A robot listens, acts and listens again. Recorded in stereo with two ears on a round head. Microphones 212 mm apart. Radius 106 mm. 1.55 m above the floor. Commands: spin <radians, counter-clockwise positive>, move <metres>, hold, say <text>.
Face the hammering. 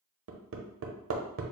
spin -0.96
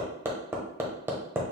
spin -0.17
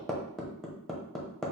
say Found it: hammering, straight ahead.